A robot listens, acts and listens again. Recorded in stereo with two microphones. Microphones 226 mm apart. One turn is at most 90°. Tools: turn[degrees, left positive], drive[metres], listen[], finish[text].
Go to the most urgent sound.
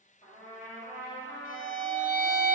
Action: listen[]
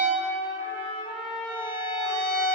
Action: listen[]
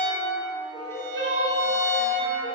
Thought: The crying: about 25° right or 155° right.
Action: turn[-25]
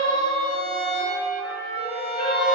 Thought: So it is at 130° right.
Action: turn[-90]
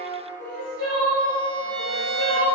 Thought: The crying is now 60° right.
Action: turn[-60]
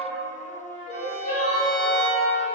Thought: The crying is now 20° right.
Action: turn[-20]
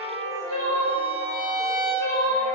Action: drive[1.0]
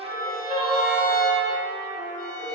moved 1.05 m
Action: drive[1.0]
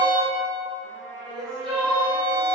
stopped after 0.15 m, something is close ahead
Action: finish[Arrived at the crying, straight ahead.]